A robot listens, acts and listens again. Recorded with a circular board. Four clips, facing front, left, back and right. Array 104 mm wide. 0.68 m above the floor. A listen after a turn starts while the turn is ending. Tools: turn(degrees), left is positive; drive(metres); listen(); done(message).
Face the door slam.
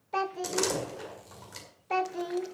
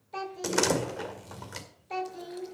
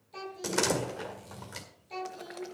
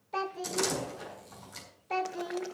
turn(degrees=105)
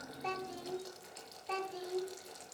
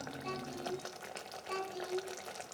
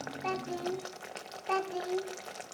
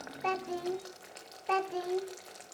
done("Facing where the door slam came from. I can't hear it now.")